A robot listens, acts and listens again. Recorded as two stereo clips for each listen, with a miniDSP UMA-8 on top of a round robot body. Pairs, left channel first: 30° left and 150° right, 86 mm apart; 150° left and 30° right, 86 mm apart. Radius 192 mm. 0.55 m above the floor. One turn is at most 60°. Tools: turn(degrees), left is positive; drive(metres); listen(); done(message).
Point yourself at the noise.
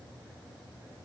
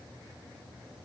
listen()
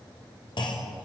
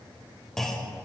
turn(degrees=60)
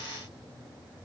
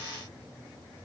done("I heard a clunk from this way, but can't make it out now.")